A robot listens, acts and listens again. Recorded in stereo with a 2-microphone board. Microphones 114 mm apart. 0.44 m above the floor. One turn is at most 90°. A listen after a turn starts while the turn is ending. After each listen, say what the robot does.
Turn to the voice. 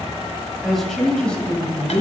Turn 15° left.
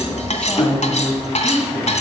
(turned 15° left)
Turn 25° left.
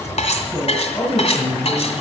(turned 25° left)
Turn 25° left.
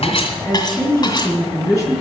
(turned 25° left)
Turn 30° left.
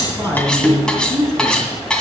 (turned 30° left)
Turn 25° right.
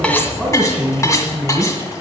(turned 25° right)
Facing the man speaking.